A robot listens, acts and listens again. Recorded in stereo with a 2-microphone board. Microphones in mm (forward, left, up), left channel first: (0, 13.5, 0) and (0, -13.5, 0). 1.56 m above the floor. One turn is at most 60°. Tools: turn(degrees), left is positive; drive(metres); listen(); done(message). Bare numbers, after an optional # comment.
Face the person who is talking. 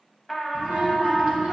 # The child speaking: about 60° right or 120° right.
turn(-60)
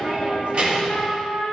# So it is at 50° right.
turn(-50)
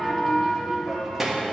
# The child speaking is now 15° right.
turn(-15)
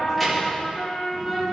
done("Facing the child speaking.")